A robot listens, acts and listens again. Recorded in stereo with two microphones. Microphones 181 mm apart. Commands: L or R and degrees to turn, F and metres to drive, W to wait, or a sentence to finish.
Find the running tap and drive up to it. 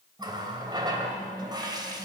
R25
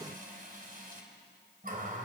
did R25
R130
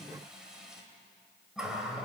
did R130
F1.0
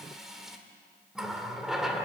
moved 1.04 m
F1.0
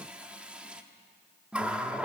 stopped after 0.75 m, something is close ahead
I am next to the running tap.